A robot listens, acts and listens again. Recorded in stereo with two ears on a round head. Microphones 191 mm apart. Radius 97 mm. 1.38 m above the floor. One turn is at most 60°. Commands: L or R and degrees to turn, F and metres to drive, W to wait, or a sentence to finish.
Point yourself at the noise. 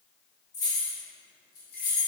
L50
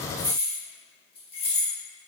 L30
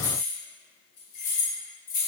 L40
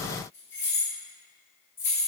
L10
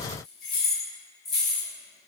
Facing the keys jangling.